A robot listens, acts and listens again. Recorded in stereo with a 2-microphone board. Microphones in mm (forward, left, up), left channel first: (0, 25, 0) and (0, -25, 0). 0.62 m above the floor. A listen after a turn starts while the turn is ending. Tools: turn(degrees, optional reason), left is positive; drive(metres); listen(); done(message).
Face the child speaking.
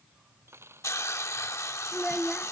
turn(degrees=30)
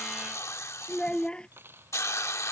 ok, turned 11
turn(degrees=160, reason="So it is at 160° left.")
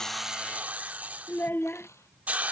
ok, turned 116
turn(degrees=45, reason="The child speaking is now 45° left.")
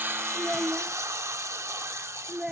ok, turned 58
turn(degrees=-15, reason="The child speaking is now 15° right.")
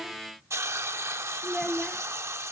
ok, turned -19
done("Facing the child speaking.")